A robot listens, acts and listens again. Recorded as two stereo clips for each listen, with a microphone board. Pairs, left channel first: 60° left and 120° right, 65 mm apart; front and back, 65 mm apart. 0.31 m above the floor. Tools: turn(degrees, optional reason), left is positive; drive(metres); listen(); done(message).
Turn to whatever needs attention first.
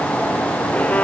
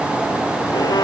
listen()
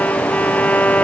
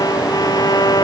listen()
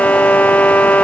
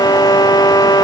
done("I can't make out anything urgent, only a violin.")